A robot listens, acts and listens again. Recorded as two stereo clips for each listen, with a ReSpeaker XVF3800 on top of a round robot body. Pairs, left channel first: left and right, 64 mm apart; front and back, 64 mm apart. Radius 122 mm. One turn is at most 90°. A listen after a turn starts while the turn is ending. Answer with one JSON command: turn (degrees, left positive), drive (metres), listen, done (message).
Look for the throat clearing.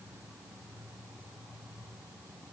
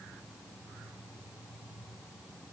{"listen": true}
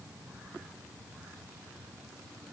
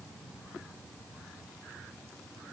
{"listen": true}
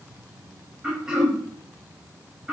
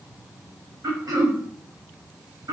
{"turn": -90}
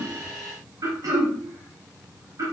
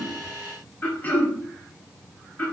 {"turn": -65}
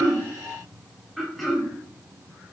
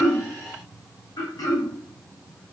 {"done": "Found it: throat clearing, straight ahead, 1 to 2 m away."}